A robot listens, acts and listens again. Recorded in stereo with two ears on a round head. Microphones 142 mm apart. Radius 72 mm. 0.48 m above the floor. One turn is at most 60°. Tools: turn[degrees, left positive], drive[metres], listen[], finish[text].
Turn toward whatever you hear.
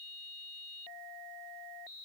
Action: listen[]
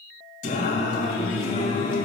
Thought: The singing: about 50° left or 130° left.
Action: turn[50]
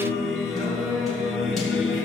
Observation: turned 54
Action: finish[Facing the singing, 2 to 4 m away.]